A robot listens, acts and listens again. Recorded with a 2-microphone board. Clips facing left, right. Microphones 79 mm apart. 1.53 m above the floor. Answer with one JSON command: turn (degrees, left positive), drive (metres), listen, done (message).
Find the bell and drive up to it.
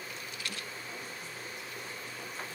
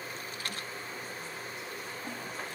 {"listen": true}
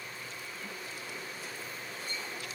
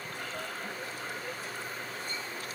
{"listen": true}
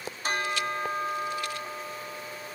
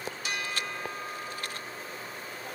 {"turn": 45}
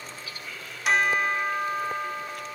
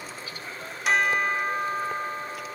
{"drive": 1.0}
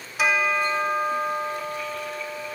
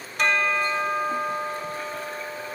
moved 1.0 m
{"drive": 1.0}
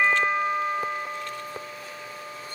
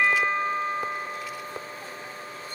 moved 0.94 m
{"turn": 10}
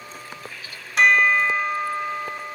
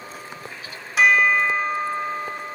{"drive": 1.0}
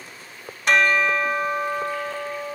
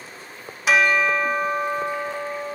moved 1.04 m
{"drive": 1.0}
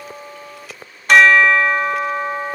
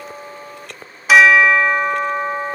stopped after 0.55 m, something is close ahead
{"done": "Arrived at the bell, straight ahead."}